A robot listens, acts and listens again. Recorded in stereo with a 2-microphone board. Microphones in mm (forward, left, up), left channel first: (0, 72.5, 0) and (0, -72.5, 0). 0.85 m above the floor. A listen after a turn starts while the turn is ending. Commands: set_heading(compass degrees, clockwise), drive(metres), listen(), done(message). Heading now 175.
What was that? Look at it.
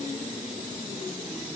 listen()
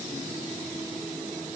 listen()
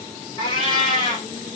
set_heading(140)
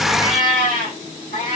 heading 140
set_heading(35)
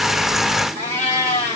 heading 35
set_heading(60)
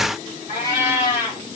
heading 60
set_heading(75)
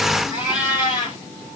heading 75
done("Found it: a cat meowing, straight ahead.")